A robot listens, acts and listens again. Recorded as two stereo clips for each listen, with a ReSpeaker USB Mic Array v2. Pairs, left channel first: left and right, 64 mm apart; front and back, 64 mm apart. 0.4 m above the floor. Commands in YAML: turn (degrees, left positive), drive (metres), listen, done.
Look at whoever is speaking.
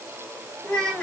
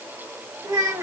turn: 160
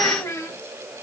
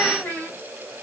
turn: 60
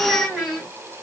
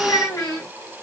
done: "Found it: a child speaking, straight ahead."